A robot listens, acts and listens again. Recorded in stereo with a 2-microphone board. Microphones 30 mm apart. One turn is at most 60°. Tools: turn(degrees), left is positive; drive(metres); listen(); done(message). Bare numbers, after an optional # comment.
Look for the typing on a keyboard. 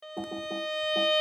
# The typing on a keyboard: about 70° right or 110° right.
turn(-60)
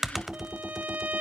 done("Found it: typing on a keyboard, straight ahead, 1 to 2 m away.")